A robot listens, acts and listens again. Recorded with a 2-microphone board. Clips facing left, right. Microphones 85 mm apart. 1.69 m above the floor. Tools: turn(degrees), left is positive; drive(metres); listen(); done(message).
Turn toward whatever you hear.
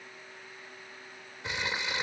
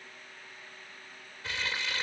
turn(degrees=20)
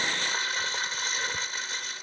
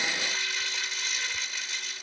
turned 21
turn(degrees=140)
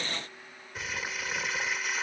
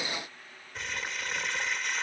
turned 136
done("Found it: crumpling, straight ahead.")